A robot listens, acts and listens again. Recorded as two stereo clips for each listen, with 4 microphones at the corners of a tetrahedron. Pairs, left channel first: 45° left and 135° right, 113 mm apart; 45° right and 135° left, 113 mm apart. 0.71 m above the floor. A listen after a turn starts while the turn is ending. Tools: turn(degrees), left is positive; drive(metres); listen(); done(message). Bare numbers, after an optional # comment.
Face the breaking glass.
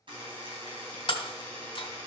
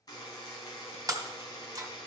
# The breaking glass: 80° left.
turn(80)
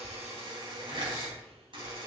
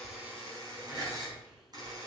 done("Facing where the breaking glass came from. I can't hear it now.")